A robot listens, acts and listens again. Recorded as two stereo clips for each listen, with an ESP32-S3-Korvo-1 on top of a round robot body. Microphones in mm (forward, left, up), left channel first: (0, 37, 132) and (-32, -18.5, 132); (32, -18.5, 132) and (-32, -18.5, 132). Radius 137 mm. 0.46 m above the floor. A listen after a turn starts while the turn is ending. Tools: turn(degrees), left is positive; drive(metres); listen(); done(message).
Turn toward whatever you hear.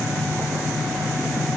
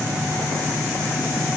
listen()
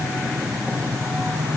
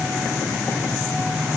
listen()
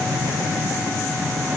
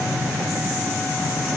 done("I can't make out anything to turn to.")